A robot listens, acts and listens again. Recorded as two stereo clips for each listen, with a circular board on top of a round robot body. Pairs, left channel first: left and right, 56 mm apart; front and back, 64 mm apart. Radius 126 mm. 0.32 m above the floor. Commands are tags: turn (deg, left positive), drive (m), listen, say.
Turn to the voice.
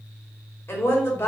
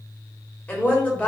<turn deg="60"/>
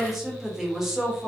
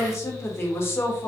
<turn deg="-15"/>
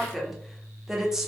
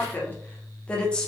<turn deg="-35"/>
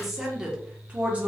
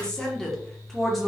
<turn deg="-90"/>
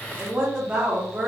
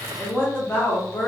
<turn deg="-35"/>
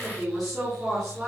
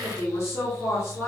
<say>Facing the woman speaking.</say>